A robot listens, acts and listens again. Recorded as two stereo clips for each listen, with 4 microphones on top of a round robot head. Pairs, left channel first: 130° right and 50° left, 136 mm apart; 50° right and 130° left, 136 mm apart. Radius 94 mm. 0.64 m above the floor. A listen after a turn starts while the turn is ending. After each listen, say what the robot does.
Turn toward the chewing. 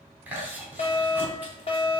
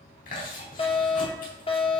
Turn 25° right.
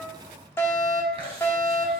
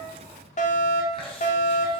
Found it: chewing, straight ahead.